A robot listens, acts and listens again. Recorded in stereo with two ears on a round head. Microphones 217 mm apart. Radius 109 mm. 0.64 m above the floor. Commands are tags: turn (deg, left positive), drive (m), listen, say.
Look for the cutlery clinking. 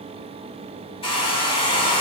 <listen/>
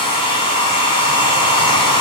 <listen/>
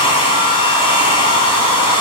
<say>I can't make out cutlery clinking, only a hair dryer.</say>